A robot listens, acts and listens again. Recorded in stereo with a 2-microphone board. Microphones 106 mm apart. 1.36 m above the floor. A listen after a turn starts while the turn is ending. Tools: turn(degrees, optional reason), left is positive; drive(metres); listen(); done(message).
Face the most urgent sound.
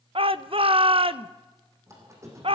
turn(degrees=-60, reason="The shout: about 60° right or 120° right.")
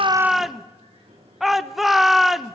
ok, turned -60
done("Found it: a shout, straight ahead, under 1 m away.")